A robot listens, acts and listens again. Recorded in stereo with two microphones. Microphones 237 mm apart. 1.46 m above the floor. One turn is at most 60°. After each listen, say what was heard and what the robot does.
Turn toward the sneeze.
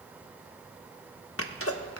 The sneeze: about 70° left or 110° left. Turn 60° left.
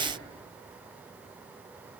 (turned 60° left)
Keep listening.
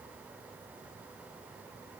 I heard a sneeze, but can't make it out now. It was about 10° left or 50° left.